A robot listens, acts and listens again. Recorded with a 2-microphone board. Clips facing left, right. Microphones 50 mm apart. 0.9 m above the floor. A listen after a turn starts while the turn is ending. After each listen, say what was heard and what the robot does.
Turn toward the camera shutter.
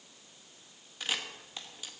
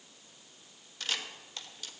Turn 30° left.
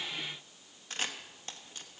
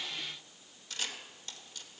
So it is at 135° left. Turn 135° left.
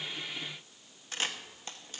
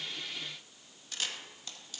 The camera shutter is now 40° left. Turn 40° left.
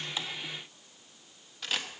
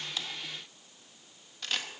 Found it: a camera shutter, straight ahead.